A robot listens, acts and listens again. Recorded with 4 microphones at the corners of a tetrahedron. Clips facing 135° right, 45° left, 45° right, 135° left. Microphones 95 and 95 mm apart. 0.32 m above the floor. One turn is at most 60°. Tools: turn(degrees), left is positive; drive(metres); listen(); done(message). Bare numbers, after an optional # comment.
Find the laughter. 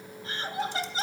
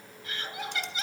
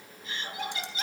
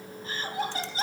# The laughter: straight behind.
turn(60)
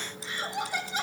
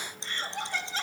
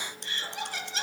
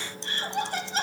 # The laughter is now 155° left.
turn(60)
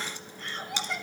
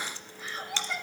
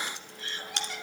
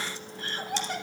# The laughter is now 135° left.
turn(60)
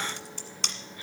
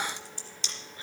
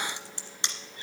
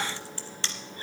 # Nothing new. It was at 75° left.
turn(60)
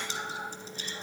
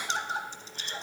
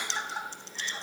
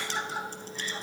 # The laughter is now 50° left.
turn(50)
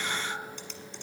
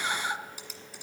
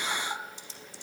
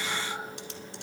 done("Found it: laughter, straight ahead.")